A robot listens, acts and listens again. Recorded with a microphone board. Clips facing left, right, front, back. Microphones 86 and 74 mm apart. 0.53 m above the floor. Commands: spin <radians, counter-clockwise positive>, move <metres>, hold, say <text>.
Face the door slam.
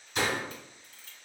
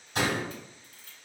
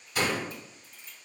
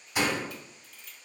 spin -1.83
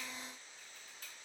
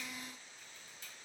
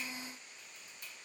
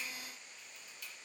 say I heard a door slam from this way, but can't make it out now.